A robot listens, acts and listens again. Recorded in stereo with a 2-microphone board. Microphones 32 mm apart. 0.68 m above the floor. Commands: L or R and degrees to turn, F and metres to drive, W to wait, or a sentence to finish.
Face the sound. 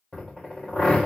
L30
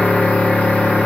L110
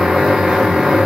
R25
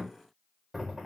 W
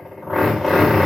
Found it: a drill, straight ahead, 1 to 2 m away.